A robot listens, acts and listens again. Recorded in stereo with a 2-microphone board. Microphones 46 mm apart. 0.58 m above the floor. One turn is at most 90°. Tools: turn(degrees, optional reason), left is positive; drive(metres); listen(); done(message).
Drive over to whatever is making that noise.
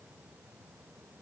listen()
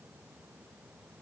listen()
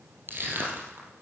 turn(degrees=-50, reason="The crushing: about 50° right or 130° right.")
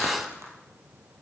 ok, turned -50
turn(degrees=-80, reason="So it is at 80° right.")
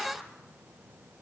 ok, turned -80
listen()
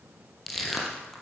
drive(metres=1.0)
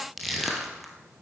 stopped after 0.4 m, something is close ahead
done("Blocked. The crushing is further on, straight ahead.")